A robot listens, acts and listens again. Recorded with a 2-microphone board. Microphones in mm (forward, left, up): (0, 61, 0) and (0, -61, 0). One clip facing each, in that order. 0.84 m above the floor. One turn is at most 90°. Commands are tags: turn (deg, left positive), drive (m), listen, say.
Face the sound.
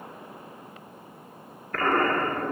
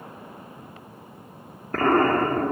<turn deg="-30"/>
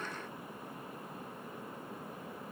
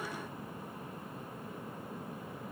<listen/>
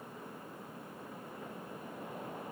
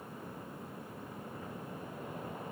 <say>I heard an explosion, but can't make it out now. It was about straight ahead or 120° right.</say>